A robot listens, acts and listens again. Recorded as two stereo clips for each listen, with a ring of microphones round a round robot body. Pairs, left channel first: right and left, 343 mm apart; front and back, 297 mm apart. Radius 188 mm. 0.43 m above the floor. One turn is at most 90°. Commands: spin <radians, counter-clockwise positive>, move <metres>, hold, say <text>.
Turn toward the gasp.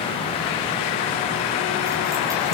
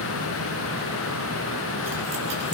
hold
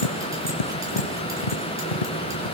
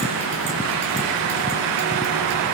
hold
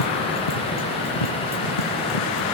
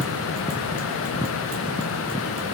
say I can't make out a gasp, only tapping.